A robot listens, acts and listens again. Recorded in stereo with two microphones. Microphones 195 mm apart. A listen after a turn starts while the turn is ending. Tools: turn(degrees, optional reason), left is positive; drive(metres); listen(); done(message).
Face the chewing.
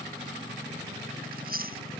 turn(degrees=-45, reason="The chewing: about 45° right or 135° right.")
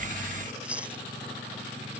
done("Found it: chewing, straight ahead.")